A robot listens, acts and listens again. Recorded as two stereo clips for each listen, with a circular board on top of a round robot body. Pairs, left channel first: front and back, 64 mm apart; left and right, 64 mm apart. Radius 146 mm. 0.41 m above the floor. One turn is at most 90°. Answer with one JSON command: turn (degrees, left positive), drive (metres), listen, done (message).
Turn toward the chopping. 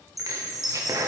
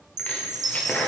{"turn": 90}
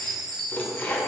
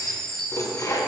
{"turn": 60}
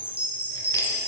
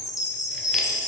{"listen": true}
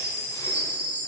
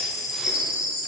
{"listen": true}
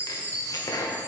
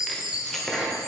{"done": "Facing the chopping, 1 to 2 m away."}